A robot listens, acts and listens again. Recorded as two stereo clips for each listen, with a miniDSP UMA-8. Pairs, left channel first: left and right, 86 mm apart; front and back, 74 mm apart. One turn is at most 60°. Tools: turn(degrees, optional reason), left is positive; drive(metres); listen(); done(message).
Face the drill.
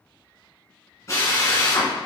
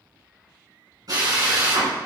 turn(degrees=60, reason="The drill: 145° left.")
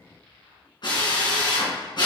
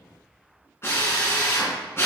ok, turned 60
turn(degrees=55, reason="The drill is now 55° left.")
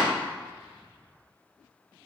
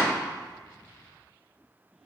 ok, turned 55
listen()
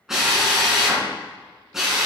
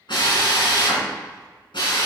done("Found it: a drill, straight ahead, 2 to 4 m away.")